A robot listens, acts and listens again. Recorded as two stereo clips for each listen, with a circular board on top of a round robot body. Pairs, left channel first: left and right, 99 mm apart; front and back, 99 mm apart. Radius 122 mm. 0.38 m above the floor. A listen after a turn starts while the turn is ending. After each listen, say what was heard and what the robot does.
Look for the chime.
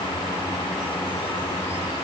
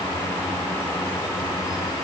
Keep listening.
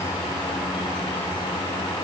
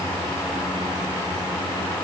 Keep listening.
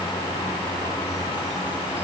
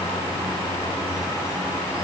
I can't make out a chime.